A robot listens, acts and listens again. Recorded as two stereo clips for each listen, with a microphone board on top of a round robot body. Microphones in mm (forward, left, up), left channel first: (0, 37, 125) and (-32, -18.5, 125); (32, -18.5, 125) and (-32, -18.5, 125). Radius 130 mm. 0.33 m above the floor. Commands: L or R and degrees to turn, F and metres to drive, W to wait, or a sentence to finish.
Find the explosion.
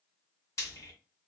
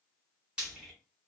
W
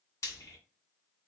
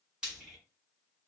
W
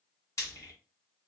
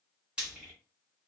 I can't make out an explosion, only frying.